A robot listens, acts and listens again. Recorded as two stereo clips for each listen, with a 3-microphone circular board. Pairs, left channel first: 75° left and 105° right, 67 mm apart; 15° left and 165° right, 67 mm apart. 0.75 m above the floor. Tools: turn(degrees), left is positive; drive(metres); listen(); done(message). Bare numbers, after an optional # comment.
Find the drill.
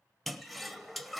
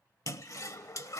listen()
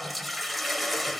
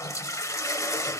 listen()
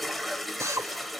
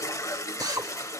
# The drill: 145° right.
turn(-145)
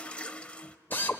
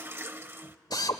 # The drill is now 15° left.
turn(15)
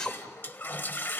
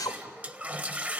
done("Found it: a drill, straight ahead.")